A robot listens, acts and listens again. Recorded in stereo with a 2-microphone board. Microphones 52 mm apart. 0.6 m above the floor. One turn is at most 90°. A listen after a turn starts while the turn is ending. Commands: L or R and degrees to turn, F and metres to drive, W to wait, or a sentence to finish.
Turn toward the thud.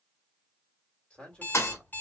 L65
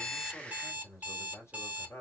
W
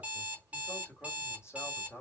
I heard a thud, but can't make it out now. It was about straight ahead or 50° left.